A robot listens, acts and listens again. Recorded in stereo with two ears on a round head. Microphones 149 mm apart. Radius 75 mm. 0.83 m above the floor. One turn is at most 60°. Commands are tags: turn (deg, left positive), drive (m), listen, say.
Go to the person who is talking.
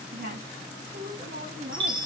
<turn deg="-60"/>
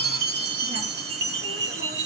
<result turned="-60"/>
<listen/>
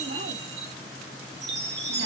<listen/>
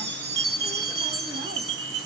<say>I heard a woman speaking, but can't make it out now. It was about 5° right or 55° right. I did not reach it.</say>